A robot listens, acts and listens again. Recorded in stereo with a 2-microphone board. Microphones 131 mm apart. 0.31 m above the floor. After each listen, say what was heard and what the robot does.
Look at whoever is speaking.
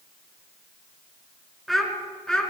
Turn 30° left.
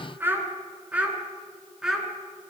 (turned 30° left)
Turn 30° right.
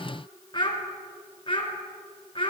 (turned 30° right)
So it is at 40° left. Turn 40° left.
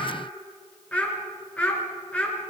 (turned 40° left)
The child speaking is now 10° left. Turn 10° left.
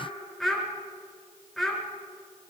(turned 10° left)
Found it: a child speaking, straight ahead, 2 to 4 m away.